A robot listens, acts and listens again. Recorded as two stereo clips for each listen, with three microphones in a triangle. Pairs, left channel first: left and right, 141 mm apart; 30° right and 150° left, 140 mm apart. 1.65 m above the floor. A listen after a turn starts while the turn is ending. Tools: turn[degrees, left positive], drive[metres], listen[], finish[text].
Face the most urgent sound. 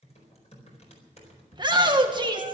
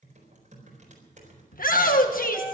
Thought: The shout: 30° right.
Action: turn[-30]
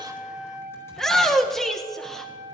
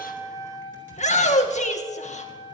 Action: finish[Facing the shout.]